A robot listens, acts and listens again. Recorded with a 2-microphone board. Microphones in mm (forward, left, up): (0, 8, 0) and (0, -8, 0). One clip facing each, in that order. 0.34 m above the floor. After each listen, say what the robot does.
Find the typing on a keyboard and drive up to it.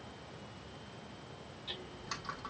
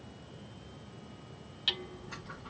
Turn 90° left.
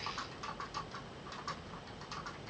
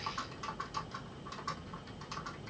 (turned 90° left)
Drive 1.0 m forward.
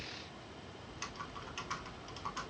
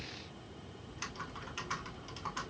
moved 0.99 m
Drive 1.0 m forward.
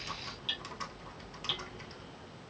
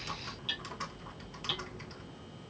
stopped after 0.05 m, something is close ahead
I am next to the typing on a keyboard.